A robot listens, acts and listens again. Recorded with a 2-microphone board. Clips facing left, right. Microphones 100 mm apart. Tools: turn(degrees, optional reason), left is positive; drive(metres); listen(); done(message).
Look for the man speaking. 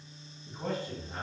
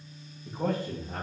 turn(degrees=-90)
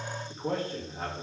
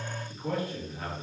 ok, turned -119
turn(degrees=35, reason="So it is at 35° left.")
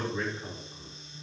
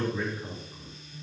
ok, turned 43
done("Facing the man speaking.")